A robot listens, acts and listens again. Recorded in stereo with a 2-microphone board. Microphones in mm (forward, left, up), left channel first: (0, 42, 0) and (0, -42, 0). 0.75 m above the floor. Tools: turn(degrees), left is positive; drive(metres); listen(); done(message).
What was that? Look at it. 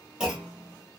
turn(degrees=-30)
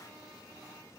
listen()
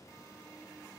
done("I heard a clunk, but can't make it out now. It was about 20° left or 140° right.")